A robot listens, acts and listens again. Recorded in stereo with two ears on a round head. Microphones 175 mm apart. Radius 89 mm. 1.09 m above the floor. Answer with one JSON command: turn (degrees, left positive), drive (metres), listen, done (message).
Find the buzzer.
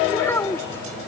{"listen": true}
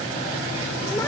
{"listen": true}
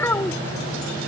{"done": "I can't make out a buzzer to turn to."}